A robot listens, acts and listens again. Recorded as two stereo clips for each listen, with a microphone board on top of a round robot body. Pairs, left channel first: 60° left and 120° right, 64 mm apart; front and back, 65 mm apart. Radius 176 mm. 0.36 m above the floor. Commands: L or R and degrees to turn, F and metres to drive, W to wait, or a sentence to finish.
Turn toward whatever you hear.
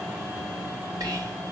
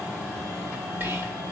R125
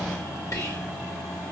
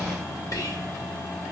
L25
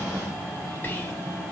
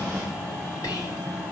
Found it: whispering, straight ahead, 2 to 4 m away.